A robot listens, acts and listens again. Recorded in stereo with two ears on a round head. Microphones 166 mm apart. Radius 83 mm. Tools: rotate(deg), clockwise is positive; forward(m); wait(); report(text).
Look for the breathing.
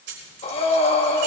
rotate(-35)
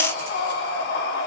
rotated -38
rotate(-110)
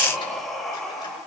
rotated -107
report("Found it: breathing, straight ahead.")